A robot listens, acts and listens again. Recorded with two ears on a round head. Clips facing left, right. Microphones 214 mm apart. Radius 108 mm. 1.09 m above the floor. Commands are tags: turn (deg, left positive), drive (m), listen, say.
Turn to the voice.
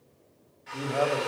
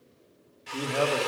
<turn deg="-30"/>
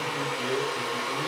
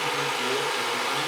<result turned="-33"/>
<listen/>
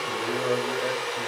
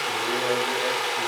<listen/>
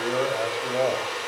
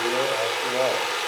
<say>I heard a man speaking, but can't make it out now. It was about 5° left or 120° right.</say>